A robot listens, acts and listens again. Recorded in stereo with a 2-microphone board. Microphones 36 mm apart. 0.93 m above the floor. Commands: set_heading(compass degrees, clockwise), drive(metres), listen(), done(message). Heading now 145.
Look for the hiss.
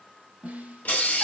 set_heading(95)
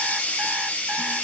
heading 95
set_heading(25)
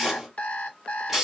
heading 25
set_heading(35)
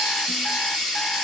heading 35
done("Facing the hiss, 1 to 2 m away.")